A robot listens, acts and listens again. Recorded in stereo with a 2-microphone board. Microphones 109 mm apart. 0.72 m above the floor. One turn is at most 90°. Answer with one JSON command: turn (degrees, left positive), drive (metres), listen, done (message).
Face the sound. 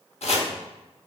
{"turn": 90}
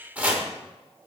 {"turn": -15}
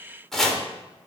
{"done": "Found it: chopping, straight ahead."}